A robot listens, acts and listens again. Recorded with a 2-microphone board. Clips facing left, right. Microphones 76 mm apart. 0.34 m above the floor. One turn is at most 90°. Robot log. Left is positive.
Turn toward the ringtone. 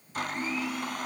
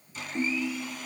cmd yaw -90
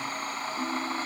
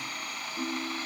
cmd idle
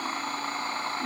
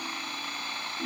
cmd idle
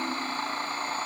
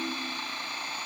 end: Facing where the ringtone came from. I can't hear it now.